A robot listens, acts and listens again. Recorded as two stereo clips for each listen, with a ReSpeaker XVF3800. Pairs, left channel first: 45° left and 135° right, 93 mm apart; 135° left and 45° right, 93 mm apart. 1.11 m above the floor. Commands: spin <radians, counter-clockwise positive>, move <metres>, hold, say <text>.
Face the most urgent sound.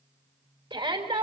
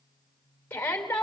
spin -2.71
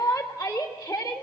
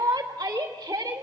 say Found it: a shout, straight ahead, 2 to 4 m away.